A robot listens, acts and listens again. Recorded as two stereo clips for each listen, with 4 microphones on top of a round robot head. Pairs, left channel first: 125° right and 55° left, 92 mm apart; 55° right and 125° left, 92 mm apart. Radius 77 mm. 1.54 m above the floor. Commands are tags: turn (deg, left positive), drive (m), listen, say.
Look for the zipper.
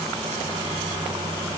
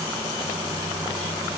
<listen/>
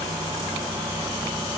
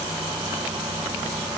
<listen/>
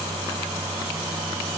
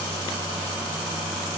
<say>I can't make out a zipper to turn to.</say>